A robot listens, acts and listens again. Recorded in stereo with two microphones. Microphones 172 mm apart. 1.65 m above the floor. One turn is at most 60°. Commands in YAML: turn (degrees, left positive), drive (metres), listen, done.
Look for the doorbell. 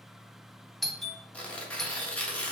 turn: 30
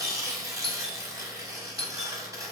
turn: 60
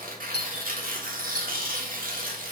turn: 60
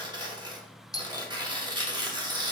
turn: 20
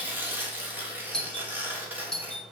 done: "Found it: a doorbell, straight ahead."